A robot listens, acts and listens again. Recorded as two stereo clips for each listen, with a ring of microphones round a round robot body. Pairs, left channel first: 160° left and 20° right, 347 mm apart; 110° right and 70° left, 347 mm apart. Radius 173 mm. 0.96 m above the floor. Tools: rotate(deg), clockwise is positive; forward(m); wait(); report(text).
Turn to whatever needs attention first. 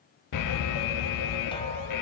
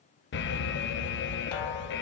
rotate(170)
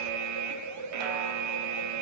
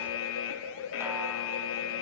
rotate(60)
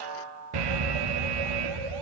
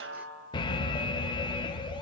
rotate(35)
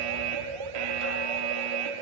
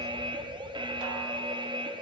rotate(10)
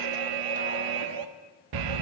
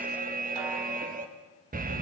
report("Found it: an alarm, straight ahead, under 1 m away.")